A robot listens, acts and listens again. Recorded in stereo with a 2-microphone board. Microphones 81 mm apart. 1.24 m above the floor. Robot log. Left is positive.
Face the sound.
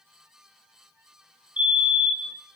note: The fire alarm: about 20° right or 160° right.
cmd yaw -20
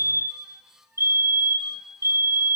note: So it is at 135° right.
cmd yaw -135
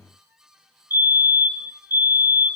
note: The fire alarm is now 35° right.
cmd yaw -35
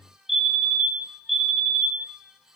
end: Found it: a fire alarm, straight ahead.